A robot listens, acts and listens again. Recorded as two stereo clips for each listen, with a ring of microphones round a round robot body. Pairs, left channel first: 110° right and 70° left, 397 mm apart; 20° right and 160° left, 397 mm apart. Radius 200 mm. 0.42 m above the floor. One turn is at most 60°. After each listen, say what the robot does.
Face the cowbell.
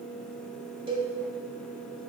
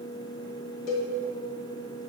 Turn 10° right.
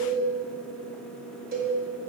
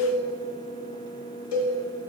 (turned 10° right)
Found it: a cowbell, straight ahead, 1 to 2 m away.